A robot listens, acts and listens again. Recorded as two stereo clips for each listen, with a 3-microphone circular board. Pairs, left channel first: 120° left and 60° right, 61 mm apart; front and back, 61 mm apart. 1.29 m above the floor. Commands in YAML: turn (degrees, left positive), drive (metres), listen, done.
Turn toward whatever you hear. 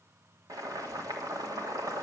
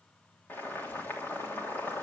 turn: -55
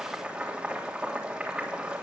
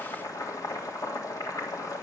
turn: 15
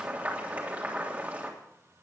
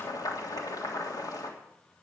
done: "Facing the boiling, 2 to 4 m away."